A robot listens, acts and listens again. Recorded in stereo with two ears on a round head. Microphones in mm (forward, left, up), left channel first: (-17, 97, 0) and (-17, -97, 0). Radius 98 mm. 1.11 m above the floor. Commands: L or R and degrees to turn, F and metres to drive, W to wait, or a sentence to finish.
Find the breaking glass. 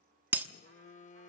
R30
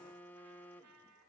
W
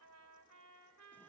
I heard breaking glass, but can't make it out now. It was about 20° left or 140° right.